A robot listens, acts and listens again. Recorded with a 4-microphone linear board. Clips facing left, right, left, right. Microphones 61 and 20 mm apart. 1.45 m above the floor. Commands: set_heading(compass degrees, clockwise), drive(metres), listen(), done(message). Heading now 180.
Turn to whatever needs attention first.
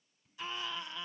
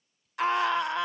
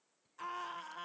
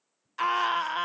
set_heading(270)
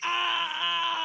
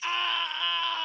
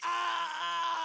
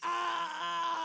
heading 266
set_heading(256)
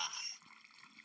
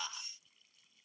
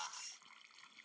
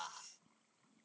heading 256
done("Facing the scream.")